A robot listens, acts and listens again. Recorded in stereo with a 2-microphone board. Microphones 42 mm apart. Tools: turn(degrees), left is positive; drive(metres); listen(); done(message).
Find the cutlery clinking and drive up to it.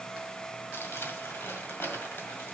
listen()
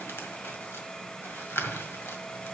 listen()
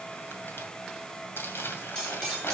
turn(degrees=30)
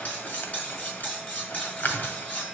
turn(degrees=135)
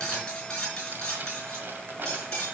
turn(degrees=20)
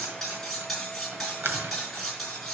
drive(metres=1.0)
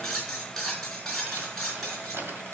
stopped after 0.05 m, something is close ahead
done("Something is in my way. I am facing the cutlery clinking but have not reached it.")